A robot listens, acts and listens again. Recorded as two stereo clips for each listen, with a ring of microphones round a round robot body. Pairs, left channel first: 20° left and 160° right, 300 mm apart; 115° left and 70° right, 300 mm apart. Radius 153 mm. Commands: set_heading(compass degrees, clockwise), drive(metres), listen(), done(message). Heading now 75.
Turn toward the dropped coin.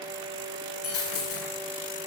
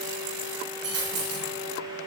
set_heading(100)
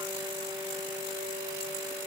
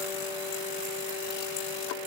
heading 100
done("Facing where the dropped coin came from. I can't hear it now.")